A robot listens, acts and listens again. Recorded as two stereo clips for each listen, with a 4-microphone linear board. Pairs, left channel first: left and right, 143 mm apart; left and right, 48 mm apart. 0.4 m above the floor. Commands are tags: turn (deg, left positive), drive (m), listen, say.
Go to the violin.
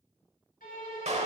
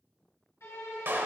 <turn deg="90"/>
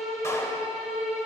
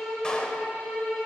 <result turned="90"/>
<drive m="1.0"/>
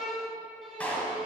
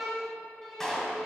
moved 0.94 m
<drive m="1.0"/>
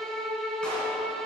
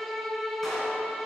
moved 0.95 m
<drive m="1.0"/>
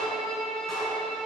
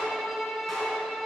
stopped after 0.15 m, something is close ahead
<say>Arrived at the violin, straight ahead.</say>